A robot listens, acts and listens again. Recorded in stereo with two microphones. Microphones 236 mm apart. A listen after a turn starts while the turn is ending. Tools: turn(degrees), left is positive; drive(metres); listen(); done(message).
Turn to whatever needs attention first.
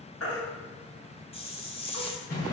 turn(degrees=70)
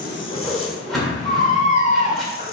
turn(degrees=30)
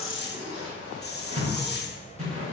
listen()
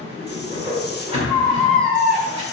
done("Facing the baby crying.")